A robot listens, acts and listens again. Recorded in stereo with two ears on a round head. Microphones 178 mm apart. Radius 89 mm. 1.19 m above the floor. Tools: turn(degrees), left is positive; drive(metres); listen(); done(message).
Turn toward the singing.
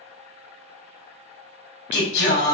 turn(degrees=55)
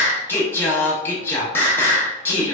turn(degrees=15)
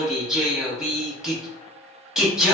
done("Facing the singing.")